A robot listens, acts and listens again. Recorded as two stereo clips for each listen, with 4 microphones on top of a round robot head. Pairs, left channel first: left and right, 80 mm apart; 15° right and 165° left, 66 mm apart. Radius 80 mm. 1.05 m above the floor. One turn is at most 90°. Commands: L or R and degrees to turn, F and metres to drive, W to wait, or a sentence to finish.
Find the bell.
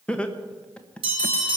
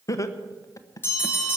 R75
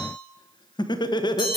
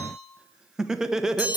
Found it: a bell, straight ahead, over 4 m away.